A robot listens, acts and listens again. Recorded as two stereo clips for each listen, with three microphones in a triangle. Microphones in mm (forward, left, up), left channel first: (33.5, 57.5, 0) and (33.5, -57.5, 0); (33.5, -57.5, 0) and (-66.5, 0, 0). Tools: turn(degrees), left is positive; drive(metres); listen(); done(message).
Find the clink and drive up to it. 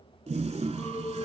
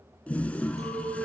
turn(degrees=155)
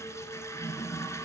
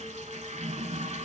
listen()
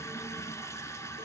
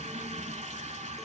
listen()
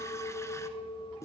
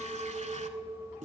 turn(degrees=60)
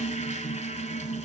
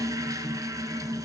listen()
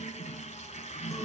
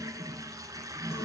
listen()
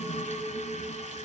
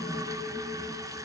done("I heard a clink from this way, but can't make it out now. I did not reach it.")